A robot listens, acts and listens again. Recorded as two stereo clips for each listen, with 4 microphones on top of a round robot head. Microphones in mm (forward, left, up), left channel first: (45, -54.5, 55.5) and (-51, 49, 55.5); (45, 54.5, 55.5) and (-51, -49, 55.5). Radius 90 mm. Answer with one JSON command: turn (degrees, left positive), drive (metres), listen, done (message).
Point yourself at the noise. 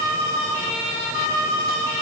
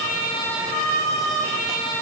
{"listen": true}
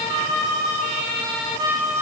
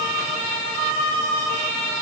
{"listen": true}
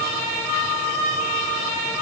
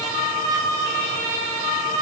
{"done": "I can't make out anything."}